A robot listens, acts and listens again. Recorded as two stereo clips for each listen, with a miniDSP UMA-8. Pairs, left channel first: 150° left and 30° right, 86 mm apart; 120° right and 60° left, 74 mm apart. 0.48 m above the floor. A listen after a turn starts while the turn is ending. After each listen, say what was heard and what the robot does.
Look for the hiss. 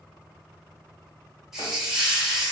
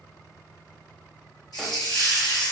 The hiss: 115° right. Turn 115° right.
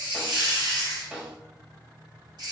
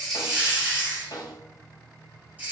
Found it: a hiss, straight ahead.